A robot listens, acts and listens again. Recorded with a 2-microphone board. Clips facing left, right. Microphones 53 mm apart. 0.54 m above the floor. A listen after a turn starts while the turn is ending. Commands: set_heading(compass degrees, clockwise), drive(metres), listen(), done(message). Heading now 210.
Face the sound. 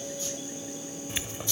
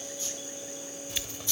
set_heading(185)
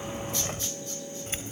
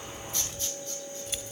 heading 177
set_heading(37)
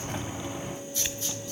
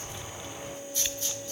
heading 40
listen()
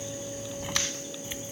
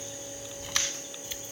set_heading(20)
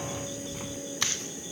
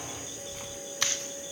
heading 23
listen()
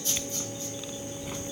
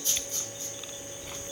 done("Facing the keys jangling.")